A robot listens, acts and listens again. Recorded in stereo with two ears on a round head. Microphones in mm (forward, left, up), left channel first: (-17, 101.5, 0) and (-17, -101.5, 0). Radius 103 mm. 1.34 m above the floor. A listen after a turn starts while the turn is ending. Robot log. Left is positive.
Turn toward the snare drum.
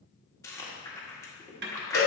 note: The snare drum: about 50° right or 130° right.
cmd yaw -50
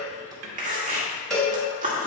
cmd idle
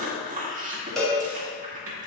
cmd idle
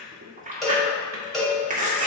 end: I heard a snare drum, but can't make it out now. It was about straight ahead or 80° right.